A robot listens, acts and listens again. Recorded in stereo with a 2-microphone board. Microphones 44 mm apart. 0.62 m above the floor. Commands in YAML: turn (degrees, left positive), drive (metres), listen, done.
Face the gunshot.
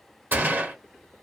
turn: -45
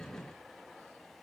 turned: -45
listen: true
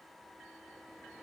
done: "I heard a gunshot, but can't make it out now. It was about straight ahead or 90° right."